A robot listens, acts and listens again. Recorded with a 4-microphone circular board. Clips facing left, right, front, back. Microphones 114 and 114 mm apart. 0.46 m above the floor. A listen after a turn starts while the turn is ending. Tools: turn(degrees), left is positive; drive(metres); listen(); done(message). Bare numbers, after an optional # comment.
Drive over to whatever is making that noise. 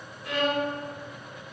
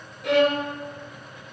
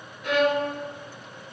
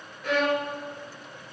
# The violin: 80° right.
turn(-80)
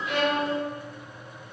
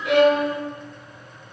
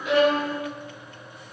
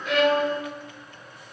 listen()
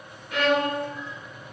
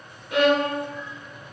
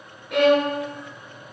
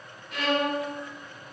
# The violin is now 20° right.
turn(-20)
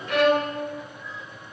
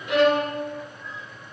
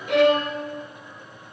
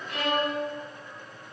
drive(1.0)
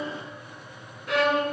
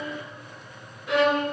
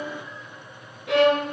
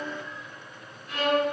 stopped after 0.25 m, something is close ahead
done("Something is in my way. I am facing the violin but have not reached it.")